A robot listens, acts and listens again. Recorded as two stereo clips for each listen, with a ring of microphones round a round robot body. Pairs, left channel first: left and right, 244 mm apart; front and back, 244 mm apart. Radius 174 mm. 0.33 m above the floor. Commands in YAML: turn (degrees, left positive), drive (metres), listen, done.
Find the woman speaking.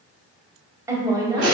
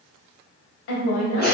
turn: -20
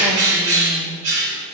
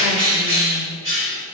listen: true
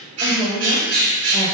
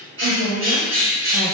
turn: -40
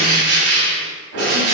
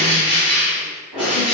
listen: true
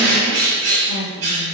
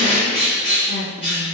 turn: -75
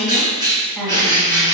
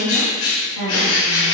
done: "Found it: a woman speaking, straight ahead."